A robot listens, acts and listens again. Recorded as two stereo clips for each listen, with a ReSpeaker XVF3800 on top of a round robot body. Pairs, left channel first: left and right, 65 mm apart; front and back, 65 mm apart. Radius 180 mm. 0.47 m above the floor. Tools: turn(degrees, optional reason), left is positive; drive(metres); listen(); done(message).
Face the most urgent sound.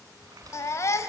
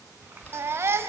turn(degrees=130, reason="The baby crying: 130° left.")
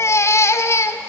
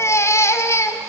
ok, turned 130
turn(degrees=45, reason="The baby crying is now 45° left.")
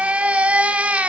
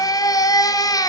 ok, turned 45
turn(degrees=-20, reason="The baby crying is now 20° right.")
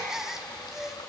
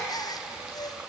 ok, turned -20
turn(degrees=-10, reason="The baby crying is now 10° right.")
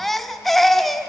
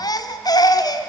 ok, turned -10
done("Found it: a baby crying, straight ahead.")